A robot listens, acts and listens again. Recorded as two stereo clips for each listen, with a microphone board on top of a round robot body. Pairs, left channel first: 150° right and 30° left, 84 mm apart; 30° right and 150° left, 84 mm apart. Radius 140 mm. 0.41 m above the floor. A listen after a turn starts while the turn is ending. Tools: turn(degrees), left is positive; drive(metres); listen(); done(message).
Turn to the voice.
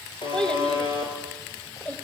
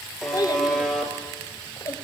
turn(degrees=-80)
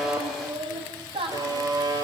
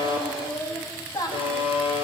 turn(degrees=20)
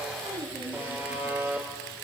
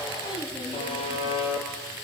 done("Found it: a child speaking, straight ahead.")